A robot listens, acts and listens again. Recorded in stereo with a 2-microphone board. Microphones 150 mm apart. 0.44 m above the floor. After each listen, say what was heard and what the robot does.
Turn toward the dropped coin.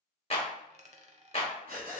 The dropped coin: about 50° right or 130° right. Turn 50° right.
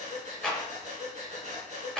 Keep listening.
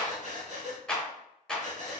I heard a dropped coin, but can't make it out now. It was about straight ahead or 80° right.